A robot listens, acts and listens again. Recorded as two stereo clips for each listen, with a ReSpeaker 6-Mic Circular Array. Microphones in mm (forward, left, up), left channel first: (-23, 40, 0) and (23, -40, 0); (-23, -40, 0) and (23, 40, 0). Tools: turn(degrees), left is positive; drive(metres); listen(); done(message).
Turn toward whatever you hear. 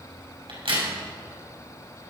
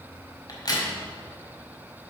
turn(degrees=-75)
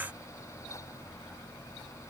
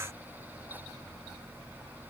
done("I heard a crack from this way, but can't make it out now.")